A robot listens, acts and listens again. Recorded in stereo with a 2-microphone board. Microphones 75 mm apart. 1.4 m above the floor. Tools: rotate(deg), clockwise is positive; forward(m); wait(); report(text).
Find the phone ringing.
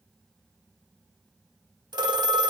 rotate(65)
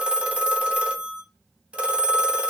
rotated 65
rotate(15)
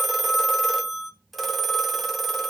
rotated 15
report("Facing the phone ringing.")